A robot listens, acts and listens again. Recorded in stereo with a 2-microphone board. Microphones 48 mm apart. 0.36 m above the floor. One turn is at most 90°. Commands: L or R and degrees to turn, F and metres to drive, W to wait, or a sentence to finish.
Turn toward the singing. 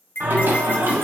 R55
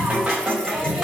R15
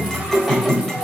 Found it: singing, straight ahead.